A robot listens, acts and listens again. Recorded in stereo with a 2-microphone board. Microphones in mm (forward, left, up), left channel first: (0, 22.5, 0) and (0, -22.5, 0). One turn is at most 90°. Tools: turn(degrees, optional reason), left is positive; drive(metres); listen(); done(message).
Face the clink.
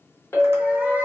turn(degrees=70, reason="The clink: about 70° left or 110° left.")
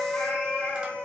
turn(degrees=40, reason="So it is at 40° left.")
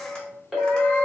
done("Found it: a clink, straight ahead.")